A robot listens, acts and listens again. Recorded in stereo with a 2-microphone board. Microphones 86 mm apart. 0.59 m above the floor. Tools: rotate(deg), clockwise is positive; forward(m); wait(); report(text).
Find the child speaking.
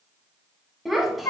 rotate(-30)
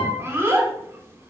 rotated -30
rotate(30)
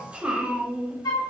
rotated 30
rotate(15)
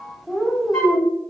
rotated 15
report("Found it: a child speaking, straight ahead, under 1 m away.")